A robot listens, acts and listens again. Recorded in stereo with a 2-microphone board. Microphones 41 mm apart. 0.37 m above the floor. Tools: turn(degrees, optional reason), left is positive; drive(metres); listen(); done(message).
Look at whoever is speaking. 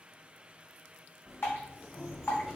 listen()
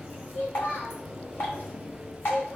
turn(degrees=55, reason="The child speaking: about 55° left or 125° left.")
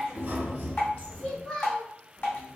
turn(degrees=20, reason="So it is at 20° left.")
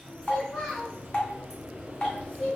done("Facing the child speaking.")